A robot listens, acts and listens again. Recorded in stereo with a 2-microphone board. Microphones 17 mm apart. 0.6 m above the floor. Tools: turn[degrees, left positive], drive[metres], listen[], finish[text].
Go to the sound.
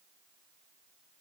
Action: listen[]
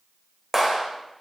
Thought: The clap: about 20° right or 160° right.
Action: turn[-20]
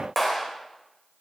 Action: drive[1.0]
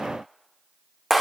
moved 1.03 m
Thought: The clap is now 10° right.
Action: turn[-10]
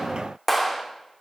Action: drive[1.0]
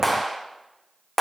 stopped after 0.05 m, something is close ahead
Action: finish[I am next to the clap.]